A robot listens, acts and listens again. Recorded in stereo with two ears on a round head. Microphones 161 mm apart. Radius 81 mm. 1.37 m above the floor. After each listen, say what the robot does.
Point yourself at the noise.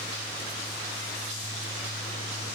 Keep listening.
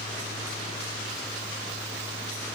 Keep listening.
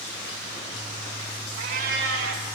Turn 60° right.
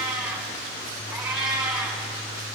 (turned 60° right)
Facing the cat meowing.